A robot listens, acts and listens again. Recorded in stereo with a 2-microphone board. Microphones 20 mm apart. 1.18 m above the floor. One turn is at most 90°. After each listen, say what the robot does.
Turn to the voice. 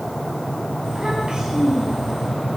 Turn 45° right.
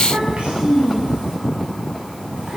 Turn 85° right.
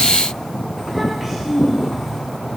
Turn 15° right.
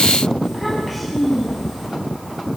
Found it: a child speaking, straight ahead, over 4 m away.